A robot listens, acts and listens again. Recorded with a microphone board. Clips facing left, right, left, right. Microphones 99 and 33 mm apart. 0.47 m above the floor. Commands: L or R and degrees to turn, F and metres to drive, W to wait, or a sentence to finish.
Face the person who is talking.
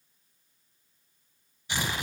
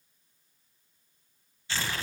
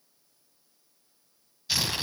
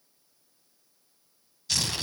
W
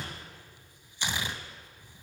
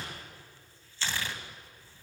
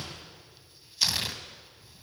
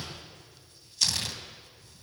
W
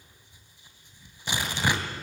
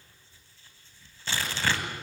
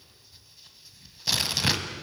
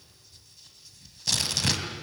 I can't make out anyone speaking to turn to.